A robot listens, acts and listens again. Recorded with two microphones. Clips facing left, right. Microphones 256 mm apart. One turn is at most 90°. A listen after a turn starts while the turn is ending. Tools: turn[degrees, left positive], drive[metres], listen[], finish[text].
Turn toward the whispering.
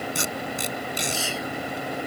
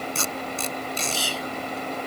Thought: The whispering: about 40° right or 140° right.
Action: turn[-40]
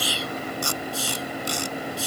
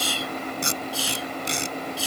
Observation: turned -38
Thought: So it is at 100° right.
Action: turn[-90]
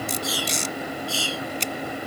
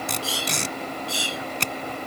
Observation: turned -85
Thought: The whispering is now 20° right.
Action: turn[-20]
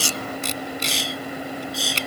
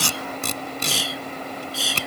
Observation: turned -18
Action: finish[Found it: whispering, straight ahead.]